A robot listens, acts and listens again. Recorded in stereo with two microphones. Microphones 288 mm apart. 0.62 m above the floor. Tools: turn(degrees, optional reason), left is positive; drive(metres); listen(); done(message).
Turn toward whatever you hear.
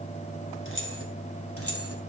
turn(degrees=50, reason="The keys jangling: about 50° left or 130° left.")
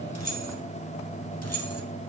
turn(degrees=55, reason="So it is at 55° left.")
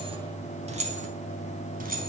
turn(degrees=-30, reason="The keys jangling is now 30° right.")
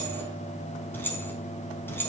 done("Facing the keys jangling.")